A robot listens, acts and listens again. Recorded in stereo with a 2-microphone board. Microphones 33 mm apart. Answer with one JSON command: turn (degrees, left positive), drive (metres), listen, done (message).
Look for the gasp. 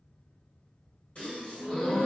{"turn": 45}
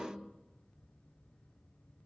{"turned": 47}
{"listen": true}
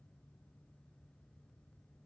{"done": "I heard a gasp, but can't make it out now. It was about straight ahead or 85° left."}